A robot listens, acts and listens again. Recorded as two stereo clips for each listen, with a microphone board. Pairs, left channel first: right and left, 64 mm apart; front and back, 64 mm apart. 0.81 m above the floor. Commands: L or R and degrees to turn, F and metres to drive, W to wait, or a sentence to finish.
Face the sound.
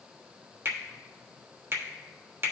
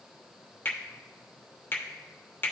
L50
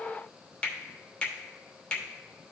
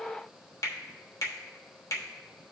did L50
R20
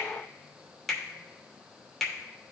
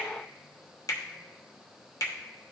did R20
Facing the finger snap.